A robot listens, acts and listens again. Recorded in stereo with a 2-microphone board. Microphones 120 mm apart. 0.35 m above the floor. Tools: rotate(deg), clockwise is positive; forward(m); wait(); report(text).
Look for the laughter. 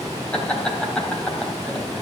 rotate(-30)
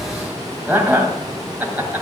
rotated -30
rotate(20)
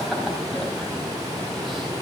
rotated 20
wait()
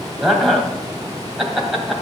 report("Facing the laughter, 2 to 4 m away.")